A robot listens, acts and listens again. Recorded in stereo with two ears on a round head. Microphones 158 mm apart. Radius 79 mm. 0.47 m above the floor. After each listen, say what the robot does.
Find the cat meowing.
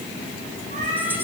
Turn 45° right.
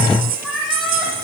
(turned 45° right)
Found it: a cat meowing, straight ahead, over 4 m away.